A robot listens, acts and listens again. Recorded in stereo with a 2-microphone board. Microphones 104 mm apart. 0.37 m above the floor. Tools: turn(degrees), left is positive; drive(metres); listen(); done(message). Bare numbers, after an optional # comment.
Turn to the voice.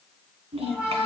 # The child speaking: about 70° right or 110° right.
turn(-70)
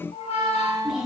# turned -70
done("Facing the child speaking.")